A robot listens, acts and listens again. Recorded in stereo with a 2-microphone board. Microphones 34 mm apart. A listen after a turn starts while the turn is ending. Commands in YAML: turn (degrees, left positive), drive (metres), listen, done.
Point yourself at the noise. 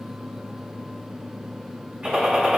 turn: -30
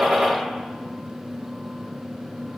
listen: true
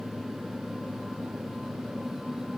done: "I heard a gunshot, but can't make it out now. It was about straight ahead or 120° right."